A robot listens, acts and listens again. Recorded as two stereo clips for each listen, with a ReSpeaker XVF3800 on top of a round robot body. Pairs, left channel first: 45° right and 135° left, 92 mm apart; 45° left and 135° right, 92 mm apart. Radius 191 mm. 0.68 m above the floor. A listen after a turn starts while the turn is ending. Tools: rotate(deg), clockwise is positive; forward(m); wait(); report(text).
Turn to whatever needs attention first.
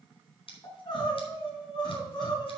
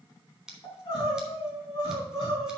report("Facing the crying, 2 to 4 m away.")